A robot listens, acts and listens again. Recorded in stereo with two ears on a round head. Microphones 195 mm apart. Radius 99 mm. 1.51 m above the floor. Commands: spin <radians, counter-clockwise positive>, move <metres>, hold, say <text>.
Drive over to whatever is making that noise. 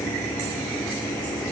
hold
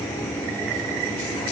hold
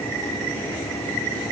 say I can't make out anything to turn to.